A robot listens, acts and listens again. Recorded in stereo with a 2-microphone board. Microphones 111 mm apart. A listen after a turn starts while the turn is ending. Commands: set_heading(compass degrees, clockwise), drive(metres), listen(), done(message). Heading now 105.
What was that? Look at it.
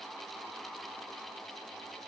listen()
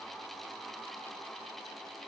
listen()
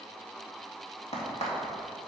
set_heading(15)
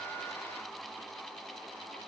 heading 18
done("I heard a crack from this way, but can't make it out now.")